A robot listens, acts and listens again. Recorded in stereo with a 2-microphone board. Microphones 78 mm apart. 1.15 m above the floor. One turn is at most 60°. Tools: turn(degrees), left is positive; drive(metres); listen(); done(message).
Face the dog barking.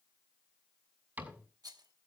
listen()
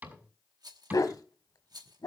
turn(degrees=60)
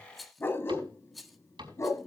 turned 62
turn(degrees=45)
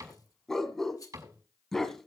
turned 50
done("Found it: a dog barking, straight ahead.")